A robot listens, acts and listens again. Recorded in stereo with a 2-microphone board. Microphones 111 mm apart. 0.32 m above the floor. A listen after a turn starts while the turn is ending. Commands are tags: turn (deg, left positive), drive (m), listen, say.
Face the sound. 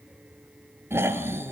<turn deg="-20"/>
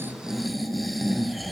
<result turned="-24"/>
<say>Facing the snoring, 1 to 2 m away.</say>